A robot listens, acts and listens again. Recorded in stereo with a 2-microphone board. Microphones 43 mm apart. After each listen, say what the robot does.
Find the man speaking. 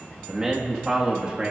Turn 25° right.
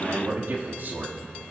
Turn 115° right.
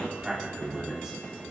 Turn 15° right.
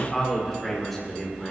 Found it: a man speaking, straight ahead, over 4 m away.